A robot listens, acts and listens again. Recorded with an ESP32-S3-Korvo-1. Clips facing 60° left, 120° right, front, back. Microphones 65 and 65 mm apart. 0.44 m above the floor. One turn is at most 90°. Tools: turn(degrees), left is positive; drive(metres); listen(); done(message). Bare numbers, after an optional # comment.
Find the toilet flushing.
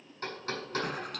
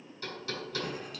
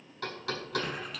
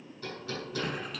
# The toilet flushing: 90° left.
turn(90)
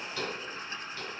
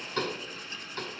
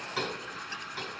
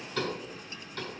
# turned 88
done("Found it: a toilet flushing, straight ahead, under 1 m away.")